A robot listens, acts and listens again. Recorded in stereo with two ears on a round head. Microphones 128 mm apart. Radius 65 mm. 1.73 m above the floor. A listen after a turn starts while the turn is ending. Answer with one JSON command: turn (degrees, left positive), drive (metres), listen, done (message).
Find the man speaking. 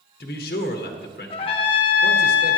{"turn": 90}
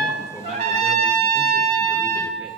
{"listen": true}
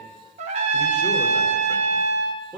{"turn": -10}
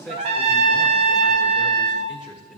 {"done": "Found it: a man speaking, straight ahead, 1 to 2 m away."}